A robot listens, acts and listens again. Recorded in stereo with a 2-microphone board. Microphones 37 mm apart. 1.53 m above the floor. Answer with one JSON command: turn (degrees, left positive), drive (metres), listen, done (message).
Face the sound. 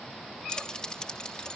{"turn": 20}
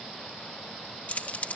{"turn": 135}
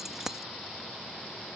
{"turn": -15}
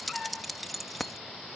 {"done": "Facing the keys jangling."}